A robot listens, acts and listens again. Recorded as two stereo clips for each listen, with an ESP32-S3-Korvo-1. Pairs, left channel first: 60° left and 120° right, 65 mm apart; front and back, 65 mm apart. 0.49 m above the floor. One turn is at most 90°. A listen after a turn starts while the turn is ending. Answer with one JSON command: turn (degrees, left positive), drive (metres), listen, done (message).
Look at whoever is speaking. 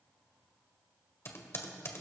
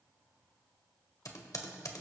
{"listen": true}
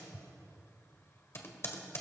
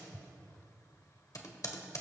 {"listen": true}
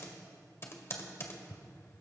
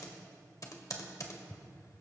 {"done": "I can't make out anyone speaking, only typing on a keyboard."}